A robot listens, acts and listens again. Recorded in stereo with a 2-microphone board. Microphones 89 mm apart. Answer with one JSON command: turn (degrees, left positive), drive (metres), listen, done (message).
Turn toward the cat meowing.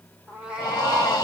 {"turn": -30}
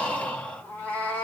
{"turn": 20}
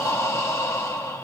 {"listen": true}
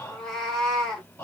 {"done": "Facing the cat meowing."}